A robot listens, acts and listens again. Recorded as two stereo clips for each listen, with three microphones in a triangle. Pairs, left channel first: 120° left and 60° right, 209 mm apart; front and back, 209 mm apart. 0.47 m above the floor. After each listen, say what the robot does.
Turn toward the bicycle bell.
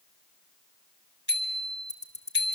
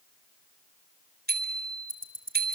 Turn 145° left.
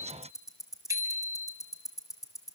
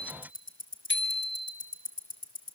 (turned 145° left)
Turn 15° left.
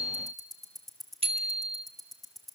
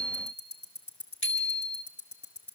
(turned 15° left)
Found it: a bicycle bell, straight ahead.